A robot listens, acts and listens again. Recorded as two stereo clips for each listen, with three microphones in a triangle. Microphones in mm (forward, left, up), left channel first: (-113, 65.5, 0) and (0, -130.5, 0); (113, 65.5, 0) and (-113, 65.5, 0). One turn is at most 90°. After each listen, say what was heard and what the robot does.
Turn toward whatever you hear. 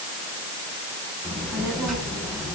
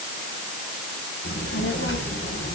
The child speaking: 30° left. Turn 30° left.
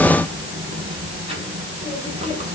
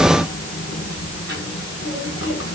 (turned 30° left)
Facing the child speaking.